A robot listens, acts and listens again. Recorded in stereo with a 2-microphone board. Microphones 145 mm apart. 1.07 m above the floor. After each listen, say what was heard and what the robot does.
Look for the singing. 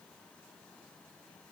Keep listening.
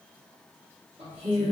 The singing: about 40° right or 140° right. Turn 40° right.
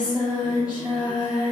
So it is at 10° right. Turn 10° right.
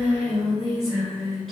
Facing the singing.